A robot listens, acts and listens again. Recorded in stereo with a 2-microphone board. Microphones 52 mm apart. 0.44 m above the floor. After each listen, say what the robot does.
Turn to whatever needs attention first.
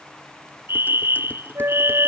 Turn 50° right.
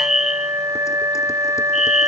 Found it: a fire alarm, straight ahead.